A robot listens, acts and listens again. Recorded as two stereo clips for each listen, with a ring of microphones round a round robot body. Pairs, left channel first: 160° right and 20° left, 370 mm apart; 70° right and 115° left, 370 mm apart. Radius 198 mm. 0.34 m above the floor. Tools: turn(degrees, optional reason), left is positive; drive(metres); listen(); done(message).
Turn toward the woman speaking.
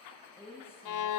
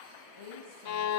turn(degrees=-75, reason="The woman speaking: 75° right.")
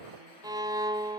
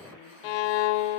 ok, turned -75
listen()
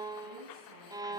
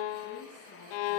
listen()
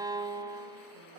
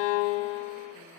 done("I heard a woman speaking from this way, but can't make it out now.")